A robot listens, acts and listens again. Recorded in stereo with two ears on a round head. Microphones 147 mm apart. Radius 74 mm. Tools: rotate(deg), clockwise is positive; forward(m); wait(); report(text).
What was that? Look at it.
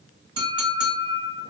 rotate(25)
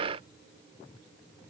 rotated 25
wait()
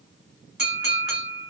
report("Facing the clink, 1 to 2 m away.")